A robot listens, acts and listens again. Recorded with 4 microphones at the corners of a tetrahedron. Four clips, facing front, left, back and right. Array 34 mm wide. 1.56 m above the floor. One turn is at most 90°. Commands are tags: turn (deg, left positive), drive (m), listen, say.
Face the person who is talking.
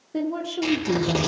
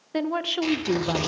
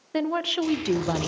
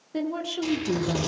<turn deg="90"/>
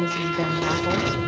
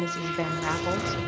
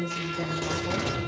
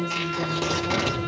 <turn deg="50"/>
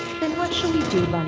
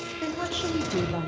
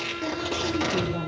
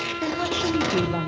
<turn deg="-10"/>
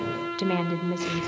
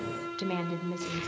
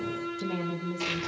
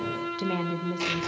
<say>Found it: a woman speaking, straight ahead, 1 to 2 m away.</say>